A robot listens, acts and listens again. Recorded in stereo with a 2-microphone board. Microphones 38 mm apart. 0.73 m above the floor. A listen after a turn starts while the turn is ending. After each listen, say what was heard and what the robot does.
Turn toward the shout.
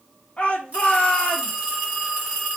The shout: about 35° left or 145° left. Turn 35° left.
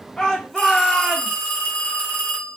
Facing the shout, 1 to 2 m away.